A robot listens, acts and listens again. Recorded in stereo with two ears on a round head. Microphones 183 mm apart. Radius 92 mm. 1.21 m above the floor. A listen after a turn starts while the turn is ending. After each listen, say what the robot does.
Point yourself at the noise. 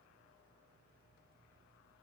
Keep listening.
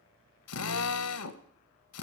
Turn 90° left.
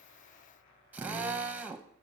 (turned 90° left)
Turn 10° right.
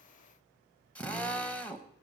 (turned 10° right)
Found it: a drill, straight ahead, under 1 m away.